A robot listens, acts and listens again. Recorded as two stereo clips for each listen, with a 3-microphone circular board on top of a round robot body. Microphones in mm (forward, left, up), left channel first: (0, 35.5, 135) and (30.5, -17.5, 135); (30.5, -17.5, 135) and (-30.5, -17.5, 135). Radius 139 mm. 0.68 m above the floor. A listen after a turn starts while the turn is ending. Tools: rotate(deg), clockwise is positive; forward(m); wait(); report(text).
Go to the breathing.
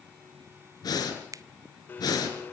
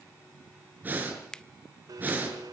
rotate(-115)
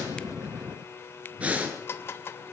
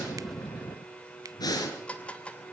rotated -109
rotate(-10)
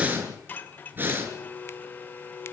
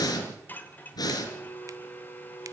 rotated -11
forward(1.0)
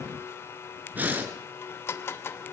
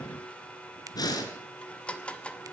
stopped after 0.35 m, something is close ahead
report("Blocked. The breathing is further on, straight ahead.")